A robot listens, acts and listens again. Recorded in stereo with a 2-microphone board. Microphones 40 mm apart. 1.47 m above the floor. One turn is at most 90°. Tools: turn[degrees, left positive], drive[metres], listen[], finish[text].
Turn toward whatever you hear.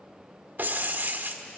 Thought: The breaking glass: about 50° right or 130° right.
Action: turn[-50]
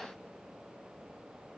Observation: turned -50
Action: listen[]
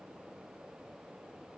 Action: finish[I heard breaking glass, but can't make it out now. It was about straight ahead or 80° right.]